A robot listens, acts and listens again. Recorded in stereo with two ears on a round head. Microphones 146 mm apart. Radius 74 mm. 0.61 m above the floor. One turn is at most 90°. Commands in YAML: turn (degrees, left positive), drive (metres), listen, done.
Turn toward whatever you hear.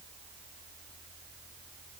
listen: true
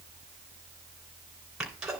turn: -30
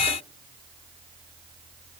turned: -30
listen: true
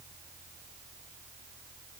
done: "I heard a sneeze, but can't make it out now. It was about 25° left or 145° right."